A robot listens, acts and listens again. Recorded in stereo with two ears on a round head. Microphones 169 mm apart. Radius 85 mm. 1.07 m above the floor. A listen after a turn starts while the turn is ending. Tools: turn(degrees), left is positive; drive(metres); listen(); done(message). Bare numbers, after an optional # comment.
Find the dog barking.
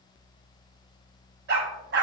# The dog barking: about 60° right or 120° right.
turn(-60)
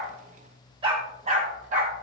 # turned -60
# So it is at 40° right.
turn(-40)
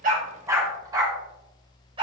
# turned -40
# The dog barking is now 25° right.
turn(-25)
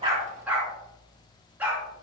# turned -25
# The dog barking is now 10° right.
turn(-10)
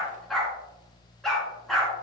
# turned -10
done("Facing the dog barking.")